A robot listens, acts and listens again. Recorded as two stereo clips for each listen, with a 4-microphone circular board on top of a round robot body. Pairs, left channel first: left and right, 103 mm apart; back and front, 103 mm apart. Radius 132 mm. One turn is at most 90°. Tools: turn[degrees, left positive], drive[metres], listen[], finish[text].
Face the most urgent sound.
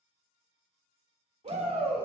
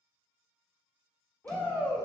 Thought: The shout: 105° right.
Action: turn[-90]
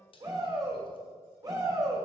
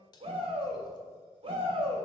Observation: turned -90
Thought: The shout is now 35° right.
Action: turn[-35]
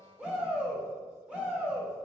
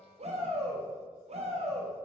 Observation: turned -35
Thought: The shout is now 10° right.
Action: turn[-10]
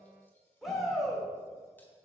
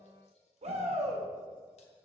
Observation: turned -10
Action: finish[Found it: a shout, straight ahead, 2 to 4 m away.]